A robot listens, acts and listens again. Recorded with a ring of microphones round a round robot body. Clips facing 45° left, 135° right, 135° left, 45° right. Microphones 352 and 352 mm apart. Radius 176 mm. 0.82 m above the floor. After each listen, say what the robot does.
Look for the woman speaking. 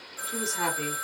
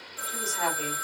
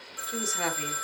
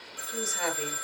Turn 110° left.
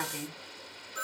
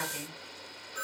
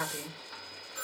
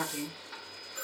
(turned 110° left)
Turn 10° left.
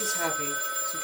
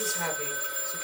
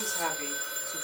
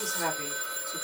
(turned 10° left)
Turn 25° left.
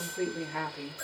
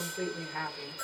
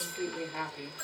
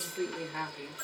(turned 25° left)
Turn 25° left.
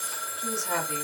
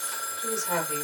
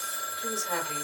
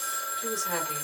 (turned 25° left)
Keep listening.
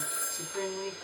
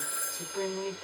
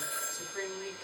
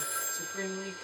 Turn 10° left.
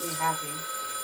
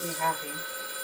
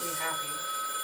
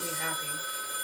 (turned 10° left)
Facing the woman speaking.